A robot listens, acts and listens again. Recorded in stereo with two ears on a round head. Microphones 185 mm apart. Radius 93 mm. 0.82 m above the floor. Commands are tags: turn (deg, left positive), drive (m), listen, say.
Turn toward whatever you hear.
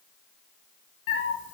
<turn deg="60"/>
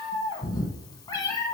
<turn deg="25"/>
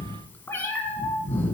<turn deg="10"/>
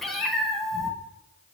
<say>Found it: a cat meowing, straight ahead.</say>